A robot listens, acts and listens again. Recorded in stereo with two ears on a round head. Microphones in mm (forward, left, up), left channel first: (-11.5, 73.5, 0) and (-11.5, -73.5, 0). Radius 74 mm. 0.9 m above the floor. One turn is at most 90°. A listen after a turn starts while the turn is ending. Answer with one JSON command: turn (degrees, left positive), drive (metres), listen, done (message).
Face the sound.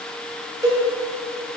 {"turn": -25}
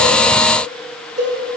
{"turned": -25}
{"turn": -90}
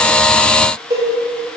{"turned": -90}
{"turn": -25}
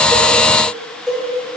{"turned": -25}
{"done": "Found it: a cowbell, straight ahead, 2 to 4 m away."}